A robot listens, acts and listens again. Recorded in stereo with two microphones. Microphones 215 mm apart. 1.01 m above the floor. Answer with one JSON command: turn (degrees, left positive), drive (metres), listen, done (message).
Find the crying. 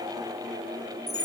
{"listen": true}
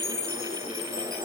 {"listen": true}
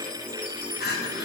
{"turn": 50}
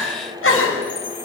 {"turn": 75}
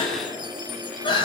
{"turn": 20}
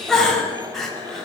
{"done": "Facing the crying, over 4 m away."}